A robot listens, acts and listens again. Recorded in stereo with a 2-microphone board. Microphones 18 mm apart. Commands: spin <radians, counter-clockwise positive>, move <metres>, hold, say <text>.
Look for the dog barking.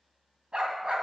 spin -1.13
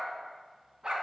spin -0.44
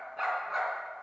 say Found it: a dog barking, straight ahead, 2 to 4 m away.